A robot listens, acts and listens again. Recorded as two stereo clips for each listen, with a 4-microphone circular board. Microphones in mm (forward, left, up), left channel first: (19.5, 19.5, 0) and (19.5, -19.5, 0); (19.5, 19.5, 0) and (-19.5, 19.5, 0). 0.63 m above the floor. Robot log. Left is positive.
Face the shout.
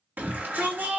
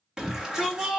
note: The shout: 110° right.
cmd yaw -110
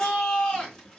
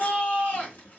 note: The shout is now 20° left.
cmd yaw +20
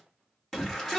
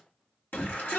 note: The shout is now 10° left.
cmd yaw +10
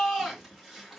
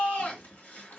end: Found it: a shout, straight ahead.